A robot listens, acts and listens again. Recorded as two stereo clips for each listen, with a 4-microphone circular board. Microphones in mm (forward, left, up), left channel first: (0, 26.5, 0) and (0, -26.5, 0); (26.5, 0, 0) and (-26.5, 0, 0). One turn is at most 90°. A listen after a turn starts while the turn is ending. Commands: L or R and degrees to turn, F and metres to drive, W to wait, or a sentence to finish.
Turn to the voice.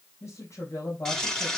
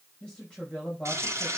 L70
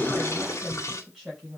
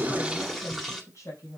R10
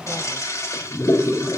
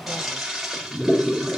W
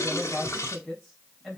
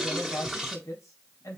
Found it: a woman speaking, straight ahead, 2 to 4 m away.